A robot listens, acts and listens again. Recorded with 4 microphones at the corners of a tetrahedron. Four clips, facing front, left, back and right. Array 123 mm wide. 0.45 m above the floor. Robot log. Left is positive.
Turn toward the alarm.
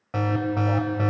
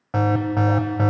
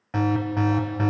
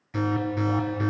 note: The alarm: 85° left.
cmd yaw +85
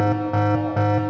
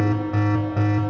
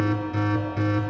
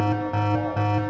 note: The alarm is now 10° right.
cmd yaw -10
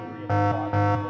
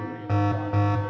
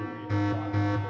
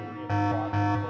end: Facing the alarm.